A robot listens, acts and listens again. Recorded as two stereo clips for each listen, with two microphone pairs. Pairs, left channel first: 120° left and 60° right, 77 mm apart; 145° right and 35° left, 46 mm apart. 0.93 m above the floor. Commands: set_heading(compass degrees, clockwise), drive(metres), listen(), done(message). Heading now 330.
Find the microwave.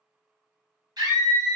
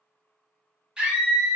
listen()
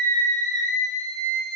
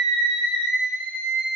listen()
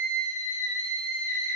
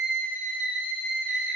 done("I can't make out a microwave, only a scream.")